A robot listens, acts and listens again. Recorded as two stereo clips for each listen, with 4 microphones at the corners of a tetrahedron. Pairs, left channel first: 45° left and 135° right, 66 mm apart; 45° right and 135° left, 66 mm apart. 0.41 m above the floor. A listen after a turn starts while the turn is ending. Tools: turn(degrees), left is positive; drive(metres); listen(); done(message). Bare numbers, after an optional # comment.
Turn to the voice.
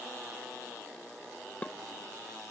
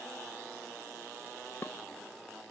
listen()
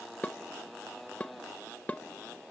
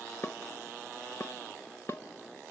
listen()
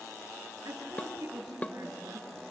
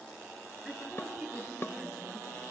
# The woman speaking: 130° right.
turn(-130)
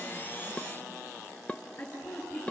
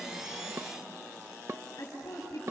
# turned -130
done("Facing the woman speaking, over 4 m away.")